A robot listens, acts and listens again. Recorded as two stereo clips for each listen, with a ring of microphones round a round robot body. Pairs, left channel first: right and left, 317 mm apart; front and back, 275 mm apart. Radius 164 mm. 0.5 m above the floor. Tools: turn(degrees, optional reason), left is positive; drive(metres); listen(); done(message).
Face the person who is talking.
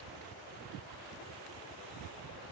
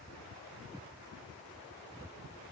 listen()
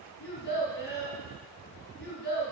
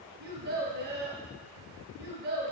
turn(degrees=-150, reason="The child speaking: 150° right.")
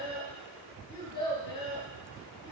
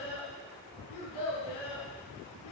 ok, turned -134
turn(degrees=-15, reason="The child speaking is now 15° right.")
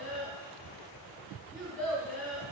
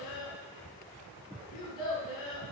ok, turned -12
done("Found it: a child speaking, straight ahead, over 4 m away.")